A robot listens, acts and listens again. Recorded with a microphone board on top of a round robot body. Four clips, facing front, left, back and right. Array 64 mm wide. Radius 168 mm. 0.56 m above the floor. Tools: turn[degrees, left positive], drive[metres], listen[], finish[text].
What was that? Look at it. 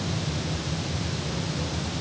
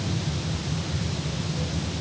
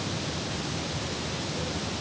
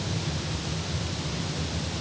Action: listen[]
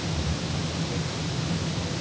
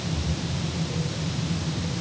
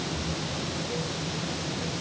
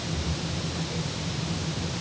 Action: listen[]
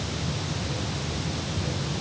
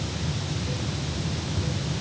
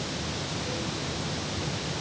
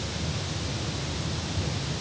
Action: finish[I can't make out anything.]